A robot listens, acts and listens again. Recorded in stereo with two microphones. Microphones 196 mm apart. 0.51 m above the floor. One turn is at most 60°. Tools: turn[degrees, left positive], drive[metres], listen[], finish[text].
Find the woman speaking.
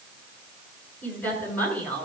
Action: turn[30]
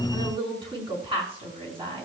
Thought: So it is at 25° right.
Action: turn[-25]
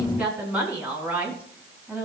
Thought: The woman speaking is now 10° right.
Action: turn[-10]
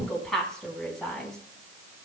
Action: finish[Facing the woman speaking, 2 to 4 m away.]